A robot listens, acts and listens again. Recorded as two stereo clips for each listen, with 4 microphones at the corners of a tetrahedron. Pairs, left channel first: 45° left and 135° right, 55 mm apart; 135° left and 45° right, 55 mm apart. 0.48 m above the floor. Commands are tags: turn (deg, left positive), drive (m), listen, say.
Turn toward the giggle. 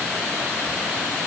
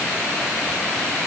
<listen/>
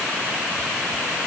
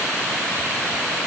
<listen/>
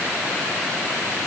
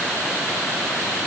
<say>I can't make out a giggle to turn to.</say>